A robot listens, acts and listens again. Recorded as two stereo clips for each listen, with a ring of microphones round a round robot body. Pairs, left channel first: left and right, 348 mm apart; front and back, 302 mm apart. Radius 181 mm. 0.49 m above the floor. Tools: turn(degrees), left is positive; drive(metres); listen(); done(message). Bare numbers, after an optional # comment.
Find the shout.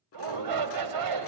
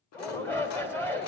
# The shout: 85° right.
turn(-85)
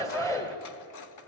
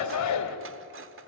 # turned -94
# The shout is now 10° left.
turn(10)
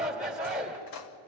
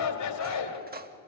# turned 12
done("Facing the shout.")